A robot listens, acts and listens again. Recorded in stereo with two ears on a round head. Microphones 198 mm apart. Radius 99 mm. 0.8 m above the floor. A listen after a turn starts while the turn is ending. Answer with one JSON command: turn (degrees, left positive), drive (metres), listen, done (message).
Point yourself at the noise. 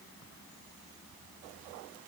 {"listen": true}
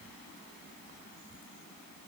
{"listen": true}
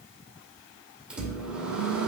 {"turn": -30}
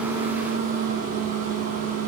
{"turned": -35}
{"turn": -140}
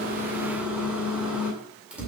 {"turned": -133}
{"done": "Found it: a microwave, straight ahead."}